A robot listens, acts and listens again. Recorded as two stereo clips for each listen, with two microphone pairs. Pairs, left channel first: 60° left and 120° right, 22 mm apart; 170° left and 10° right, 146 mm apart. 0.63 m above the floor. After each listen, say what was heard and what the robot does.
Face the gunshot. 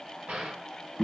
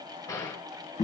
The gunshot: 125° right. Turn 125° right.
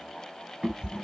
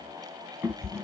I heard a gunshot from this way, but can't make it out now.